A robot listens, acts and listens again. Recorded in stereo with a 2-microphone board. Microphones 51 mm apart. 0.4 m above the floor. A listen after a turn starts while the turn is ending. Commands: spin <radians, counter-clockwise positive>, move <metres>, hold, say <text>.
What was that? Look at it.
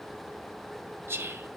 spin -0.87
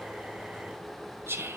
spin -1.13
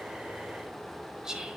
spin -0.26
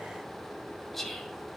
say Found it: whispering, straight ahead, 1 to 2 m away.